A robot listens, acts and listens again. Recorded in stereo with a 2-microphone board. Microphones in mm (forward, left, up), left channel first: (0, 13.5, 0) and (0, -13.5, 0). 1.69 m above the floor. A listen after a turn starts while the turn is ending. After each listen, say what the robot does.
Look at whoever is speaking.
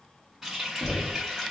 Keep listening.
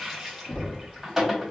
Keep listening.
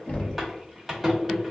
I can't make out anyone speaking, only a running tap and knocking.